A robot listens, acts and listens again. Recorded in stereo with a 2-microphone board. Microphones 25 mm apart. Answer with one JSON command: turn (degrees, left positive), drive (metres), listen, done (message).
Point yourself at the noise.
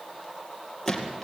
{"turn": 30}
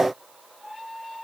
{"listen": true}
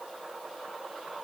{"done": "I heard a gunshot, but can't make it out now. It was about 20° right or 140° left."}